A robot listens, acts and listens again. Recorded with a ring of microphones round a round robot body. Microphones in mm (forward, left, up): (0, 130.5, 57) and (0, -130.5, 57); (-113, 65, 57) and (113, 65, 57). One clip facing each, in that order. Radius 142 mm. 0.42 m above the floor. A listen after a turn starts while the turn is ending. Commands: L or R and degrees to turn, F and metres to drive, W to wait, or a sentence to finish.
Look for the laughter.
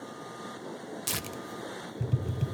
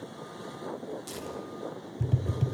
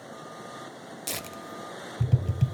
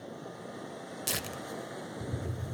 W
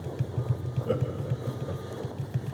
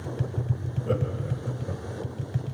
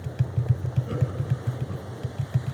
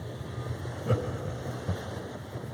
Facing the laughter, 2 to 4 m away.